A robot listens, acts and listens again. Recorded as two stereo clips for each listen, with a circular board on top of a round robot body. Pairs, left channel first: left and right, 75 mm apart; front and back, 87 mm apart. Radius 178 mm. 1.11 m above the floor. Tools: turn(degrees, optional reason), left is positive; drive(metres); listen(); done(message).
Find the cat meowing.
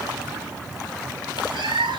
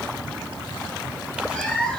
turn(degrees=-80, reason="The cat meowing: 80° right.")
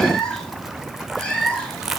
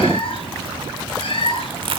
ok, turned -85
turn(degrees=15, reason="The cat meowing is now 15° left.")
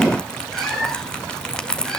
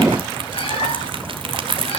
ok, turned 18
listen()
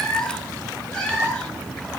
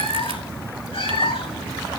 turn(degrees=15, reason="The cat meowing is now 15° left.")
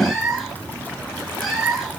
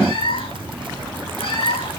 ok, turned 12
done("Facing the cat meowing, over 4 m away.")